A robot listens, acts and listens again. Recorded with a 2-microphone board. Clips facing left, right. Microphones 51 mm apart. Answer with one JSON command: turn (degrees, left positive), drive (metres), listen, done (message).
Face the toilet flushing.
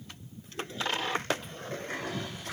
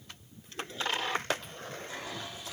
{"turn": 50}
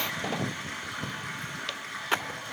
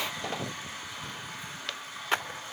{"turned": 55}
{"turn": 70}
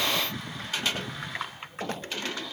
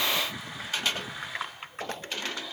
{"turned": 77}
{"done": "Found it: a toilet flushing, straight ahead."}